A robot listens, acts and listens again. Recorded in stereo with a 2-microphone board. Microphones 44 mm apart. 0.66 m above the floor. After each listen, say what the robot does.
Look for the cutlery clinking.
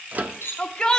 Turn 65° left.
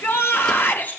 Keep listening.
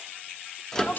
Turn 55° left.
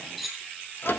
Facing the cutlery clinking, over 4 m away.